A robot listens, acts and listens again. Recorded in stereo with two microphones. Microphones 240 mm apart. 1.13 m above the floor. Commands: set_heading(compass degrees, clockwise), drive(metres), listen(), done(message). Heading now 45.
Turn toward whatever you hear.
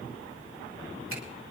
listen()
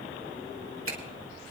set_heading(105)
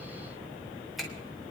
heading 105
done("Facing the finger snap.")